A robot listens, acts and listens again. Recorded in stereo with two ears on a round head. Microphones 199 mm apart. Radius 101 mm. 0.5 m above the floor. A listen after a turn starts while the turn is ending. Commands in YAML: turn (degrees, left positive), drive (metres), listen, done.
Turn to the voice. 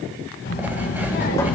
turn: 45
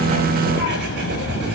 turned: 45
turn: 110
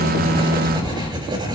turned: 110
turn: 20
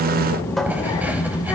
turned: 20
turn: 20
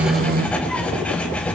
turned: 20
done: "Found it: a child speaking, straight ahead."